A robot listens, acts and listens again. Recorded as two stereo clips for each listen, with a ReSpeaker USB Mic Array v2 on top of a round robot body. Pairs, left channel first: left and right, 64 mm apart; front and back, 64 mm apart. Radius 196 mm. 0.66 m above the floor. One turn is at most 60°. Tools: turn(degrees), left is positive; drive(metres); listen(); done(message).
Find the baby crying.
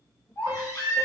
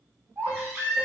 turn(degrees=60)
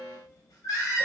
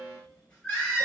turn(degrees=60)
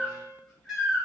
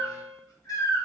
done("Facing the baby crying.")